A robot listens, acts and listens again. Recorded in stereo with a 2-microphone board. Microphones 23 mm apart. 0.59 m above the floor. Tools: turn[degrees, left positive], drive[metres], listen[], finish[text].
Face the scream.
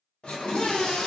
Thought: The scream: about 60° left or 120° left.
Action: turn[60]
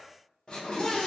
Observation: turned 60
Thought: So it is at 35° left.
Action: turn[35]
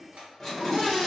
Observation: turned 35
Action: finish[Found it: a scream, straight ahead.]